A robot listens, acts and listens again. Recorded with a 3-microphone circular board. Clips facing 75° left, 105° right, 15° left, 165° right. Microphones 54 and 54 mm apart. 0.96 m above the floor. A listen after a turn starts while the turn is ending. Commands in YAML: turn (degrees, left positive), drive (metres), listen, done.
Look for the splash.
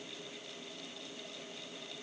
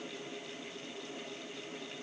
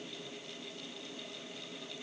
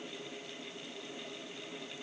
listen: true
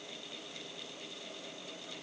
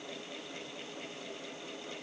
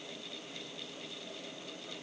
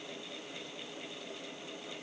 listen: true
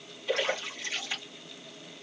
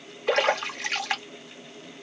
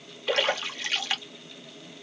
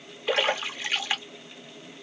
turn: -90
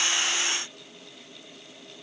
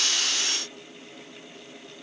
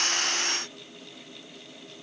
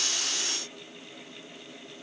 done: "I heard a splash from this way, but can't make it out now."